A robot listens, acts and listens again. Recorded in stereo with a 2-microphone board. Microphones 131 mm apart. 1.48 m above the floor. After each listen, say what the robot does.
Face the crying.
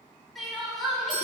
Turn 30° left.
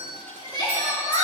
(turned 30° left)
Turn 150° left.
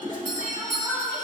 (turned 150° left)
Found it: crying, straight ahead, over 4 m away.